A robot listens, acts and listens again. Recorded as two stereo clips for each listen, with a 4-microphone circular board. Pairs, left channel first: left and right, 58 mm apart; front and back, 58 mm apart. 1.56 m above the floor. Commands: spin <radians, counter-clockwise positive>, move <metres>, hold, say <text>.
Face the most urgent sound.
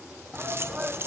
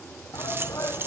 spin -0.26
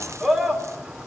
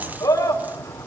say Found it: a shout, straight ahead.